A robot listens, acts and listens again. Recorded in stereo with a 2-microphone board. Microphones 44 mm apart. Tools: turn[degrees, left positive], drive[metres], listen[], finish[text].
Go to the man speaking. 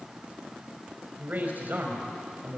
Thought: The man speaking: about 45° right or 135° right.
Action: turn[-45]
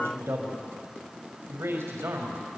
Thought: So it is at 90° right.
Action: turn[-90]
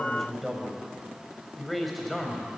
Action: drive[1.0]
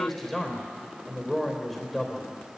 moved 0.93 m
Action: drive[1.0]
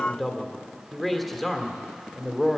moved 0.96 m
Action: drive[1.0]
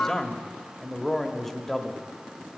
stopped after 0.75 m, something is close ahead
Thought: The man speaking is now 10° left.
Action: turn[10]
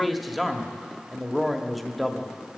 Action: finish[I am next to the man speaking.]